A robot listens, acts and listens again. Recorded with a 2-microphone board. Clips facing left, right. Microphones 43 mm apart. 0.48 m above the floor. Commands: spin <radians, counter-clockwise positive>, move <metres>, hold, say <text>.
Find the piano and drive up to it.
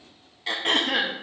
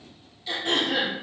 hold
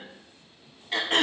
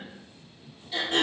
hold
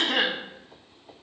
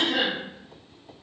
say I can't make out a piano, only throat clearing.